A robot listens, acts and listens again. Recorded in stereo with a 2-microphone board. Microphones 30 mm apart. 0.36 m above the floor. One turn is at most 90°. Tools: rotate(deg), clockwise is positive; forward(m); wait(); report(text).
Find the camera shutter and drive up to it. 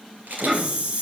rotate(90)
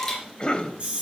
forward(1.0)
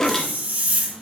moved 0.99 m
wait()
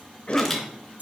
forward(1.0)
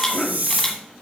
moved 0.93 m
wait()
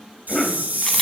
wait()
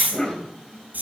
report("Facing where the camera shutter came from. I can't hear it now. I did not reach it.")